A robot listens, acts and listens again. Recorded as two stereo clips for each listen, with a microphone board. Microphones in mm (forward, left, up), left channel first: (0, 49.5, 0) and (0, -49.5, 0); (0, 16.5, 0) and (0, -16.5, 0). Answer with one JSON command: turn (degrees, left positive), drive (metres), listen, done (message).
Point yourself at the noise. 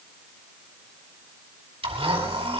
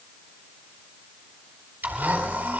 {"turn": -90}
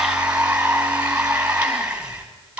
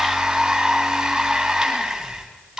{"turn": -10}
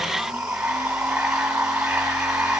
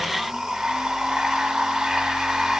{"done": "Facing the blender."}